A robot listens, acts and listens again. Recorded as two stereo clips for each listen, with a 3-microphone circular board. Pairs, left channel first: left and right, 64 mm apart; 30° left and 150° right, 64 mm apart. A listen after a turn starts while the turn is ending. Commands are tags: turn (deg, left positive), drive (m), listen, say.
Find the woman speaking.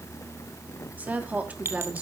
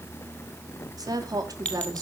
<turn deg="-155"/>
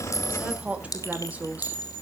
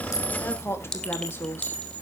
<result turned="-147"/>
<turn deg="-25"/>
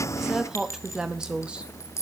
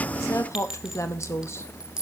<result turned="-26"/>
<turn deg="-15"/>
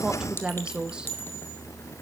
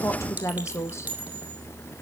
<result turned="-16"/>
<turn deg="-15"/>
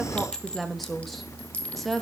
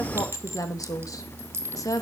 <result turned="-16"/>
<say>Facing the woman speaking, 1 to 2 m away.</say>